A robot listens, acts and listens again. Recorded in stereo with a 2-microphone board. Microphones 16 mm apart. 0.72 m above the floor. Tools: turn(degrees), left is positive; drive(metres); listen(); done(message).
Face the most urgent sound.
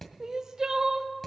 turn(degrees=-40)
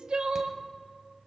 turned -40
turn(degrees=-100)
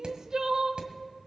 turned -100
turn(degrees=-45)
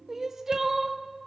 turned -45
turn(degrees=-30)
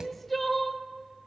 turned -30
turn(degrees=10)
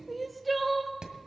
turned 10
done("Found it: crying, straight ahead.")